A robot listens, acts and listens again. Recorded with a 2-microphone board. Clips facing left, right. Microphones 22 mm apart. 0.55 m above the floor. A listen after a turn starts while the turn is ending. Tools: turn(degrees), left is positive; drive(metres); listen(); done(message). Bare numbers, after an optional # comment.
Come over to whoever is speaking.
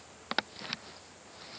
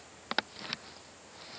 listen()
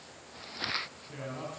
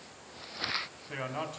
# The man speaking: about 40° right or 140° right.
turn(-40)
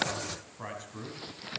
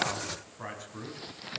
drive(1.0)
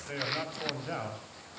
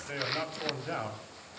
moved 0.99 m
drive(1.0)
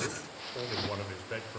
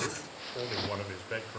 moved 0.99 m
# The man speaking is now 10° right.
turn(-10)
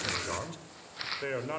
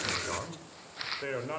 drive(1.0)
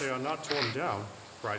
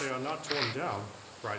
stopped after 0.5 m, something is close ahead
# The man speaking is now 10° left.
turn(10)
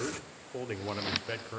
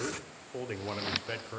done("Arrived at the man speaking, straight ahead.")